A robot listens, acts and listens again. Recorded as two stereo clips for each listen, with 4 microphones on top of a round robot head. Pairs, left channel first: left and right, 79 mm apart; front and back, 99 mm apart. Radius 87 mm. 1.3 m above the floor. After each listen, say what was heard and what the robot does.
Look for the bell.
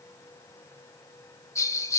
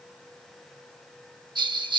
The bell: 140° left. Turn 140° left.
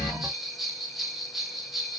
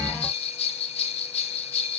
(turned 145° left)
Facing the bell.